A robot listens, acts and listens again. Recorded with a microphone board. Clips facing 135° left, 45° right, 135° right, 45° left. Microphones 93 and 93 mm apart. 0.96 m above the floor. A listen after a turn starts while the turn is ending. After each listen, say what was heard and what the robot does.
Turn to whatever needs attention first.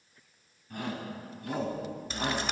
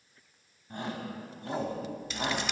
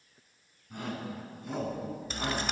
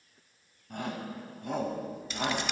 The shout: 15° left. Turn 15° left.
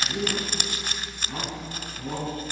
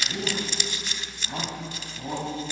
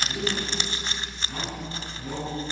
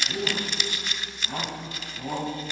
Facing the shout.